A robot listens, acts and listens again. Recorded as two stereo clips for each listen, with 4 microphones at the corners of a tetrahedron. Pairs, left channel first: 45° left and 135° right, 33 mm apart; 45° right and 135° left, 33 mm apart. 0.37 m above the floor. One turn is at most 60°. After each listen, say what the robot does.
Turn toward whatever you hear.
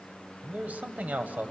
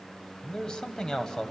Turn 60° right.
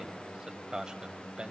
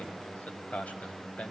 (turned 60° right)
Turn 60° right.
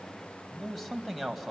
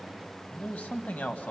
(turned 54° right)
Turn 45° right.
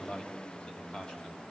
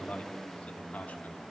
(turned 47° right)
Turn 10° right.
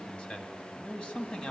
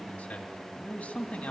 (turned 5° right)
Facing the man speaking, 2 to 4 m away.